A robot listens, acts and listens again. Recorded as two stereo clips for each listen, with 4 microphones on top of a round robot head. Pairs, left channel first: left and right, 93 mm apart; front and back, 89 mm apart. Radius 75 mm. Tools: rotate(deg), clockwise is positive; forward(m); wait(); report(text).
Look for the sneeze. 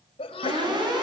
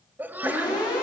rotate(-115)
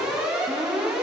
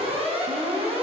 report("Facing where the sneeze came from. I can't hear it now.")